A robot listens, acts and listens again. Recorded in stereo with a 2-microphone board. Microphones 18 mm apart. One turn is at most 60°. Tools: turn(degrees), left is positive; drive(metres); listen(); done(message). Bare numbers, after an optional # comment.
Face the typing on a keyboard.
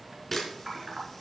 # The typing on a keyboard: about 30° right or 150° right.
turn(-30)
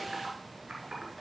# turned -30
# So it is at 115° right.
turn(-60)
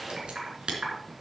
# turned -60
# The typing on a keyboard is now 60° right.
turn(-60)
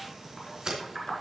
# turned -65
done("Facing the typing on a keyboard.")